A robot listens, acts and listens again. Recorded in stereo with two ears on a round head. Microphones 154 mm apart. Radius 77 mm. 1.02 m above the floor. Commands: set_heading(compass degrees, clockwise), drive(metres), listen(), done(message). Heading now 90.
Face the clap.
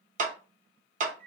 set_heading(135)
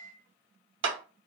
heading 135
set_heading(225)
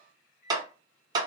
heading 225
set_heading(250)
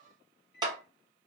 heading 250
set_heading(275)
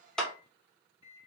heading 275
done("Facing the clap, under 1 m away.")